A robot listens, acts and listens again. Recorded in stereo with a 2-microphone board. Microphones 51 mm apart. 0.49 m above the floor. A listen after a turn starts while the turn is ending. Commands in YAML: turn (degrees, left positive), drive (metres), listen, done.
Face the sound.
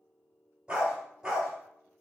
turn: -30
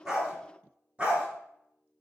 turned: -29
turn: -25
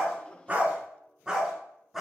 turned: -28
turn: -30
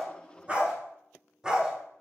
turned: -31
turn: -15
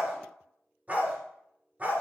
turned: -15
turn: -30
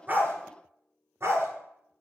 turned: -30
turn: -120
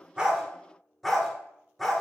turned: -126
done: "Found it: a dog barking, straight ahead, 1 to 2 m away."